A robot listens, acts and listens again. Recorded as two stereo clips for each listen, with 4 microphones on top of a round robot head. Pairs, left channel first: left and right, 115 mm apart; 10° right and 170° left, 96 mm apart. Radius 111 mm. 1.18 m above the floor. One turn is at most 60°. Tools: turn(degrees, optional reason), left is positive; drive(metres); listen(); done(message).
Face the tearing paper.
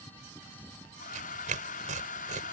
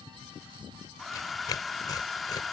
turn(degrees=-60, reason="The tearing paper: 65° right.")
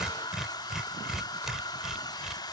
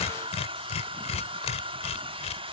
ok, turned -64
done("Facing the tearing paper.")